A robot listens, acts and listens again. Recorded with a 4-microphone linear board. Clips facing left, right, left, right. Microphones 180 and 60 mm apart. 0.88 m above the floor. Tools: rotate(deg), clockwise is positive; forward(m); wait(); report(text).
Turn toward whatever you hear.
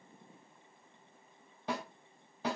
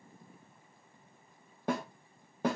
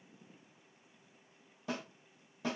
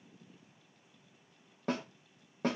rotate(50)
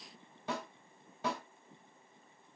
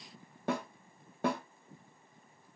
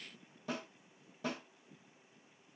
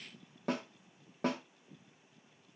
rotate(70)
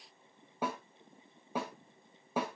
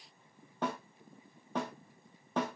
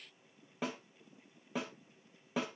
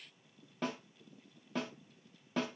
rotate(-10)
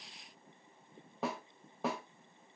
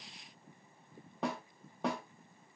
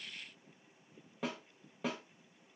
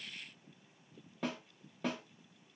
report("Found it: a snare drum, straight ahead.")